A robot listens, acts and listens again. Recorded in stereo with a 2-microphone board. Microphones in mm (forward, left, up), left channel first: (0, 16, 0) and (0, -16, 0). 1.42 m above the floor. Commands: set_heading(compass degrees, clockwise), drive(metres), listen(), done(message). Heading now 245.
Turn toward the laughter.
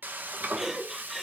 set_heading(275)
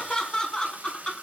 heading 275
set_heading(250)
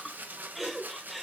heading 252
done("Found it: laughter, straight ahead.")